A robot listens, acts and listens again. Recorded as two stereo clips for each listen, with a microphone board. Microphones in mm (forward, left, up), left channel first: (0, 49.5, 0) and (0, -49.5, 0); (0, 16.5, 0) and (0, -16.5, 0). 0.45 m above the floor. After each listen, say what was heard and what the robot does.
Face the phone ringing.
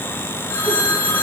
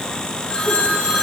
The phone ringing: about 20° left or 160° left. Turn 20° left.
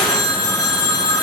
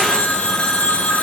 So it is at 135° left. Turn 135° left.
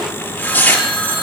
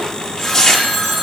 The phone ringing is now 15° left. Turn 15° left.
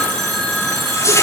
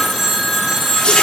Facing the phone ringing, 2 to 4 m away.